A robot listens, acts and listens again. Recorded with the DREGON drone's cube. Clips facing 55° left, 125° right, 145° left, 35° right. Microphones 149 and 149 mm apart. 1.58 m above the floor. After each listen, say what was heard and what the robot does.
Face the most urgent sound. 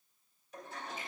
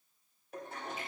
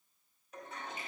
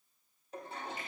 Keep listening.
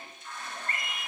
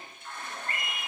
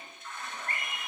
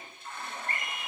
The scream: 150° left. Turn 150° left.
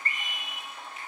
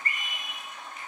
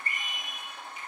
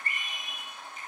Found it: a scream, straight ahead.